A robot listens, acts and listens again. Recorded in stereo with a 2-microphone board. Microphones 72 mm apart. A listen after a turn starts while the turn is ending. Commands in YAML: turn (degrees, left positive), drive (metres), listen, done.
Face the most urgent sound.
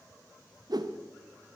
listen: true
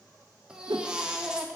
turn: -30
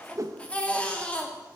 turn: 15
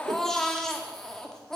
done: "Found it: a baby crying, straight ahead."